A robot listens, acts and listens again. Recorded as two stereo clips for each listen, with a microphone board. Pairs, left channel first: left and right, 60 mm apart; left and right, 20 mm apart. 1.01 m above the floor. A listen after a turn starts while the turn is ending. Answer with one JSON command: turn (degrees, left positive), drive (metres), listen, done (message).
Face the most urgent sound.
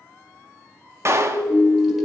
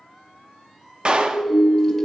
{"turn": -40}
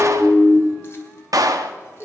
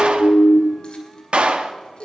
{"done": "Found it: a siren, straight ahead."}